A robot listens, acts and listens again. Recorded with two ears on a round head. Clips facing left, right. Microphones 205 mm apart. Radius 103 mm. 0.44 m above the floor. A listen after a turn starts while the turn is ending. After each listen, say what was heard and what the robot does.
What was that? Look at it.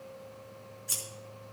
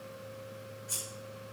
The scissors: about 40° left or 140° left. Turn 40° left.
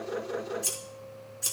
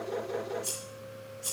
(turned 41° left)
So it is at 95° left. Turn 95° left.
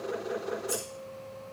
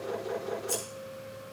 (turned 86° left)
The scissors is now 10° left. Turn 10° left.
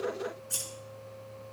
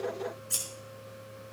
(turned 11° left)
Found it: scissors, straight ahead, over 4 m away.